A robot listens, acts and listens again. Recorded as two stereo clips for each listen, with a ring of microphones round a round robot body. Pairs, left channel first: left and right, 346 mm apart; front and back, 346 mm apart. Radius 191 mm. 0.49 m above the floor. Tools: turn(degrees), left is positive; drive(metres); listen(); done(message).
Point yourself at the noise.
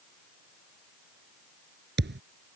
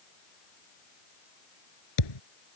turn(degrees=-30)
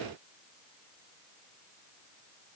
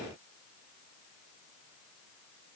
done("Facing where the thud came from. I can't hear it now.")